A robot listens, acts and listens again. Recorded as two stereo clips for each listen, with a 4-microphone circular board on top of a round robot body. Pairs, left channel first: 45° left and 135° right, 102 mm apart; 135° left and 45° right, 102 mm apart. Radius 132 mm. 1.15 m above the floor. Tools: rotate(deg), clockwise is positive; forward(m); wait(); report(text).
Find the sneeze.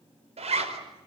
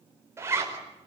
wait()
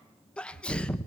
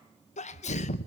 rotate(-125)
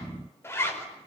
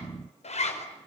report("Facing where the sneeze came from. I can't hear it now.")